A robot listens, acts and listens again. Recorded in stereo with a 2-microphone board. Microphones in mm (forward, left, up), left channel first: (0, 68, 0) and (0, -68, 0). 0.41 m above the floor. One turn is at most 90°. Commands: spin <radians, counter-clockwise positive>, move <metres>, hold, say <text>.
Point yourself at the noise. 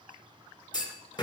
spin 0.61
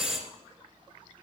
say Facing the clunk, 1 to 2 m away.